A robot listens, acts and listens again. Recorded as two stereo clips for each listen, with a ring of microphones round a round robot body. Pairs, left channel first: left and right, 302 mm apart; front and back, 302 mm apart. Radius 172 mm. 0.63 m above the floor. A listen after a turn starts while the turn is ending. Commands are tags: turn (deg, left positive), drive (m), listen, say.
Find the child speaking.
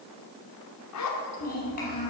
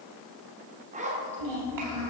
<turn deg="155"/>
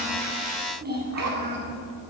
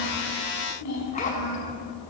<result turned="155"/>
<turn deg="-35"/>
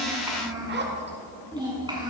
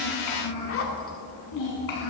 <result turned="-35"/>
<turn deg="-15"/>
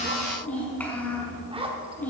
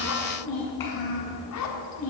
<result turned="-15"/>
<say>Found it: a child speaking, straight ahead, over 4 m away.</say>